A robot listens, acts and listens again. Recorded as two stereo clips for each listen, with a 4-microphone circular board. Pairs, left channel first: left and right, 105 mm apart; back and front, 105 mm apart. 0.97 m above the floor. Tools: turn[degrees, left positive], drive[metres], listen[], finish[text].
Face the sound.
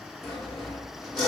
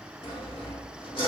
Thought: The sawing: straight behind.
Action: turn[180]
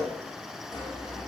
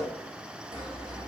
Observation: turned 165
Thought: The sawing is now 15° left.
Action: turn[15]
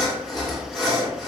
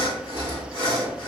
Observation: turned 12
Action: finish[Found it: sawing, straight ahead, 1 to 2 m away.]